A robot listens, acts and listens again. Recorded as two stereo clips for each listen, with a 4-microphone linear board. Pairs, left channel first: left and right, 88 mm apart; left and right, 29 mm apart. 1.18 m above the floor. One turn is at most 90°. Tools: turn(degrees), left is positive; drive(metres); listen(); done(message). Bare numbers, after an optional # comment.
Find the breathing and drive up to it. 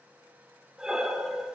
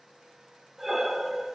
turn(-30)
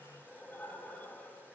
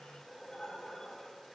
# So it is at 20° left.
turn(20)
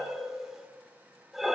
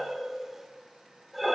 drive(1.0)
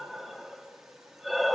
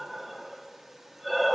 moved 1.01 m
drive(1.0)
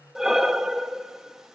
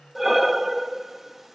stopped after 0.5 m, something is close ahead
done("I am next to the breathing.")